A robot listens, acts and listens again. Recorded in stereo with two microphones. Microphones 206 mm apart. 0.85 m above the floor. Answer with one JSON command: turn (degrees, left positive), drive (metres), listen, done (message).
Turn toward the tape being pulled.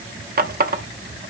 {"listen": true}
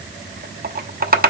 {"listen": true}
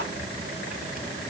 {"done": "I can't make out tape being pulled, only a running tap."}